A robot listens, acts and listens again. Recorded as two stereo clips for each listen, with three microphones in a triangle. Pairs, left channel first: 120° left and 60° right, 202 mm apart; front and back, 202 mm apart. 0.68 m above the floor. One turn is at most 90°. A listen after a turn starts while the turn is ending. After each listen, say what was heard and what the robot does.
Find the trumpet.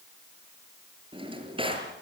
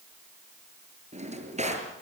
Keep listening.
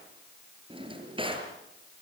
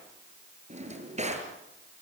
Keep listening.
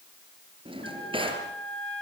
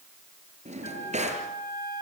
The trumpet: 45° right. Turn 45° right.
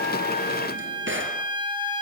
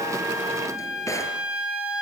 Found it: a trumpet, straight ahead, over 4 m away.